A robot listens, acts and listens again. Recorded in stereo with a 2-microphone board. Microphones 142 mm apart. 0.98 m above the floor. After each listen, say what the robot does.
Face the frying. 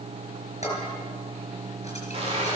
Turn 45° right.
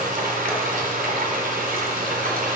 Turn 90° right.
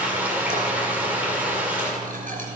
Turn 10° right.
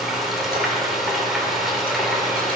Found it: frying, straight ahead, 2 to 4 m away.